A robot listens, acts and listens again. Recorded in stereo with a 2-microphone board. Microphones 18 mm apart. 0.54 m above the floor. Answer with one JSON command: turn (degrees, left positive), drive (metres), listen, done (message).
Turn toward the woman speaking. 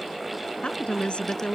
{"turn": 90}
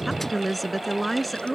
{"done": "Facing the woman speaking."}